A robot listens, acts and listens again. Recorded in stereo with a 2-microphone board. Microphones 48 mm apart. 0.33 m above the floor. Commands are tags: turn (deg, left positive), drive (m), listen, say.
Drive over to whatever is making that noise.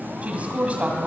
<turn deg="-30"/>
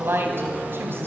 <turn deg="-115"/>
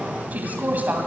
<turn deg="-40"/>
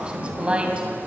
<turn deg="-25"/>
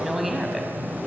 <drive m="1.0"/>
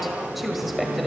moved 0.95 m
<drive m="1.0"/>
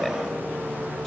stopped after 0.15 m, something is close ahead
<say>I am next to the woman speaking.</say>